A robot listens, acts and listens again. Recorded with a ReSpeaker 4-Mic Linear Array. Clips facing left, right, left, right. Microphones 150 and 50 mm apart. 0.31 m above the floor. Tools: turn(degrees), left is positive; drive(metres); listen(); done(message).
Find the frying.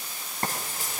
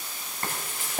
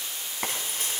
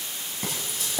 turn(degrees=35)
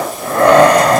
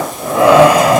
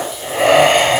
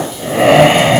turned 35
listen()
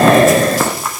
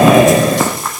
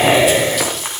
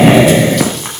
done("Found it: frying, straight ahead.")